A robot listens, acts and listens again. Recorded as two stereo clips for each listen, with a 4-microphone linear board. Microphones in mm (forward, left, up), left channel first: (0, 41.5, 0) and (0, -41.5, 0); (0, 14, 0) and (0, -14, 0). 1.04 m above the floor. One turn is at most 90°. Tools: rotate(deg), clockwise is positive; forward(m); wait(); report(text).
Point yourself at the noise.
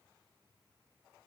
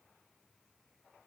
wait()
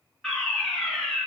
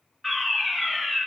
rotate(-30)
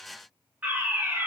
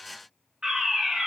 rotate(25)
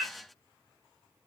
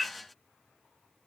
rotate(15)
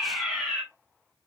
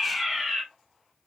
report("Found it: a fire alarm, straight ahead, 2 to 4 m away.")